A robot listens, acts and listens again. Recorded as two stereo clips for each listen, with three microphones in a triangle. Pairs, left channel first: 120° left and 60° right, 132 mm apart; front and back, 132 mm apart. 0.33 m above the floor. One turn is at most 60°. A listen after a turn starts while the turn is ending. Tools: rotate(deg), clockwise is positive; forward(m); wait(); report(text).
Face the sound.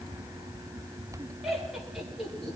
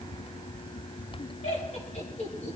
rotate(-30)
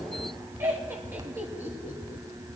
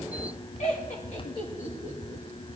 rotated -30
rotate(-15)
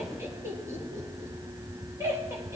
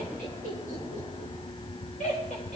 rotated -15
rotate(-10)
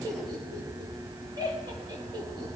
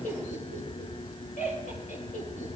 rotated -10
report("Facing the laughter.")